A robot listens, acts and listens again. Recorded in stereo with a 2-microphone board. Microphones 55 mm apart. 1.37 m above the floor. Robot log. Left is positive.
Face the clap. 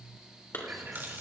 note: The clap: about 40° left or 140° left.
cmd yaw +40
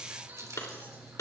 note: So it is at 100° left.
cmd yaw +100
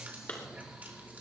note: The clap is now 30° left.
cmd yaw +30
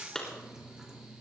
note: The clap is now 10° left.
cmd yaw +10
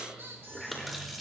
cmd idle
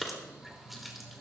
end: Found it: a clap, straight ahead.